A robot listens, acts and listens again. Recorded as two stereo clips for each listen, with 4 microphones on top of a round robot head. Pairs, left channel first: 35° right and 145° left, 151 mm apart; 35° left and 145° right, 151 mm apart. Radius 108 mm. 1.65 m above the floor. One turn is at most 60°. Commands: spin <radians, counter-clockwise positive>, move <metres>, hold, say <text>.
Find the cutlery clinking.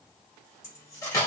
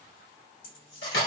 spin 0.61
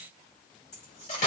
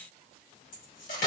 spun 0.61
say Found it: cutlery clinking, straight ahead.